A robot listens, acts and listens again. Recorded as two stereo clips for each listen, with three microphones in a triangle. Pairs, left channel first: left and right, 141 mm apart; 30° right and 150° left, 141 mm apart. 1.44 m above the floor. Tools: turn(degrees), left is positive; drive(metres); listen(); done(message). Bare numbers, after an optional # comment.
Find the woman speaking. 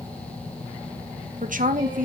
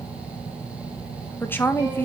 # The woman speaking: 105° right.
turn(-105)
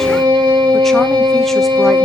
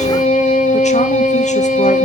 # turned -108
listen()
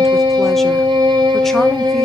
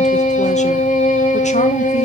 listen()
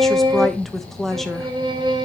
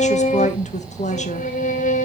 done("Found it: a woman speaking, straight ahead, 1 to 2 m away.")